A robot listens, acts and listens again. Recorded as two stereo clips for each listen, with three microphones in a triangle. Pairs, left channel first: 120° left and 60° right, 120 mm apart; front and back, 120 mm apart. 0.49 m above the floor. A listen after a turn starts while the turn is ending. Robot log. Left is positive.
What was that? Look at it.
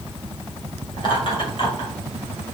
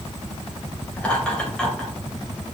note: The laughter: 85° left.
cmd yaw +85
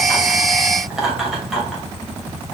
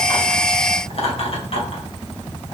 note: The laughter is now 30° left.
cmd yaw +30
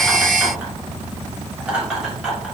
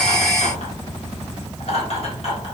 note: The laughter is now 20° left.
cmd yaw +20
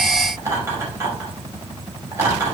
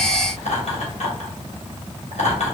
end: Found it: laughter, straight ahead, 2 to 4 m away.